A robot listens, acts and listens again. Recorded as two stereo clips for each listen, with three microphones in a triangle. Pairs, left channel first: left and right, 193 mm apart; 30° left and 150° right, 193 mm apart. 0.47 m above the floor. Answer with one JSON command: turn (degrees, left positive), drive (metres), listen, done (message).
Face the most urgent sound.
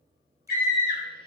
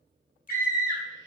{"turn": 60}
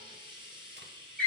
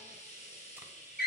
{"turn": 10}
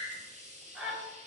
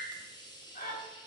{"done": "Found it: a scream, straight ahead."}